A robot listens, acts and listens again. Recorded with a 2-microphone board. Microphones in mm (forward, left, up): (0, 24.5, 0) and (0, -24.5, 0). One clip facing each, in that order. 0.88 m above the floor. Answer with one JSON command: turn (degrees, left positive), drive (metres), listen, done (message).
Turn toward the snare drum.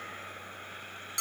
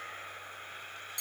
{"listen": true}
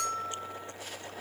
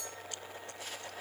{"listen": true}
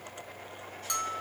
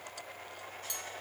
{"done": "I can't make out a snare drum to turn to."}